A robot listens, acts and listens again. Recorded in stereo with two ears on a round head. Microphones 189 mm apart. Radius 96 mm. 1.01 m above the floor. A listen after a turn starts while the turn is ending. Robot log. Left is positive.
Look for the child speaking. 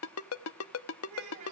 note: The child speaking: about 30° right or 150° right.
cmd yaw -30
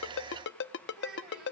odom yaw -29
end: Found it: a child speaking, straight ahead.